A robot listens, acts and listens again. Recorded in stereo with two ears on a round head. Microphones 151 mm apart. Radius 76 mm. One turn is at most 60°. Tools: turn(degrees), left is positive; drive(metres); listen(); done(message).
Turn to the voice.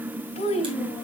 turn(degrees=35)
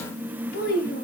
turn(degrees=60)
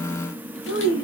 turn(degrees=60)
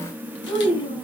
turn(degrees=30)
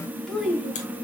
done("Facing the child speaking, 2 to 4 m away.")